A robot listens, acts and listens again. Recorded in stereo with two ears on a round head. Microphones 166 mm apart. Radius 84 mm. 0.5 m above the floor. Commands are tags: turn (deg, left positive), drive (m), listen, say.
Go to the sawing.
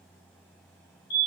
<listen/>
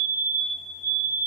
<listen/>
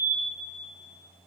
<say>I can't make out sawing, only a fire alarm.</say>